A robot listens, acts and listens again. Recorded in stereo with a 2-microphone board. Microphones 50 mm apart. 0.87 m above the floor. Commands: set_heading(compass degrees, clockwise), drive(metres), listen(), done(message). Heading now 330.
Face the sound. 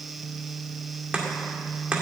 set_heading(350)
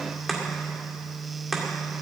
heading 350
done("Facing the chopping.")